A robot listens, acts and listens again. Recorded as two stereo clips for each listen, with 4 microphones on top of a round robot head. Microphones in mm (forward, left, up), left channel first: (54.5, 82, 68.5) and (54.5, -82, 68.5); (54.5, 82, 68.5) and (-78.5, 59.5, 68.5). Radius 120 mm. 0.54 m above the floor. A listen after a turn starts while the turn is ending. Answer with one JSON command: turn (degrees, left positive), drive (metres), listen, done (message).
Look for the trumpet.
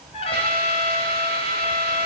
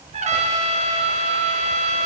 {"turn": 155}
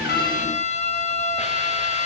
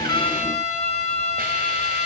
{"turn": 45}
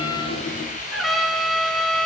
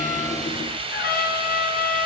{"done": "Found it: a trumpet, straight ahead."}